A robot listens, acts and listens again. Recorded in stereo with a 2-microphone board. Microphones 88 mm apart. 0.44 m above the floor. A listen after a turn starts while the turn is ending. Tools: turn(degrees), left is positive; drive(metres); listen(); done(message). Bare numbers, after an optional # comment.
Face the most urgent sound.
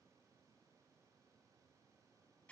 listen()
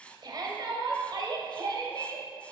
# The shout: about 50° right or 130° right.
turn(-50)
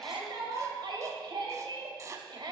# So it is at 70° right.
turn(-70)
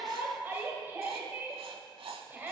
# The shout is now 25° right.
turn(-25)
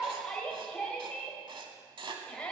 # The shout is now 10° left.
turn(10)
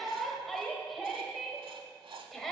done("Facing the shout.")